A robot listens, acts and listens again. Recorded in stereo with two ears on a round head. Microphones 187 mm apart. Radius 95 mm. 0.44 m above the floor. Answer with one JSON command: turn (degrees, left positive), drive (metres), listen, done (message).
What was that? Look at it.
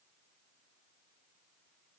{"listen": true}
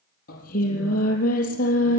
{"turn": 40}
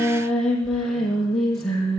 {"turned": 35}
{"done": "Found it: singing, straight ahead."}